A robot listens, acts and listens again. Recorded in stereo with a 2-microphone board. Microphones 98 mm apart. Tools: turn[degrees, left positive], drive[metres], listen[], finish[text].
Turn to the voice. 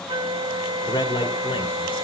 Thought: The man speaking: about 55° left or 125° left.
Action: turn[55]
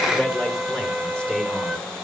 Thought: So it is at 10° left.
Action: turn[10]
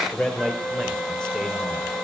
Action: finish[Facing the man speaking, over 4 m away.]